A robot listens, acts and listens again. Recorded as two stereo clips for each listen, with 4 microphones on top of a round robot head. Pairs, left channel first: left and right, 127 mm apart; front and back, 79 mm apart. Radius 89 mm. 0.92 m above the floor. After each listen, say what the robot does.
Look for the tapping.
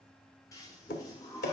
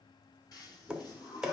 Turn 100° left.
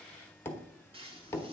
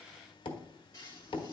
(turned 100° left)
Turn 20° left.
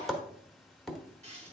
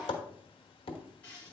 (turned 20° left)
Found it: tapping, straight ahead, 1 to 2 m away.